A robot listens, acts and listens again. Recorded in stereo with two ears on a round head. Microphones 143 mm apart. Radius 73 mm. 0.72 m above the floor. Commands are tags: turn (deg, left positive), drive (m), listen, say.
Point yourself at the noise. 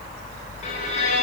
<turn deg="45"/>
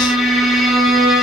<say>Facing the violin.</say>